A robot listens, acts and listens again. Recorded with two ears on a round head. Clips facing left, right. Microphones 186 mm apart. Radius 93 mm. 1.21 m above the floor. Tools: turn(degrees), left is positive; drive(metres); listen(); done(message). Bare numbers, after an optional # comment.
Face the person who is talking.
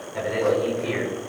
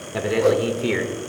# The man speaking: about 70° right or 110° right.
turn(-70)
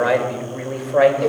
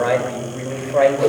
done("Facing the man speaking, 2 to 4 m away.")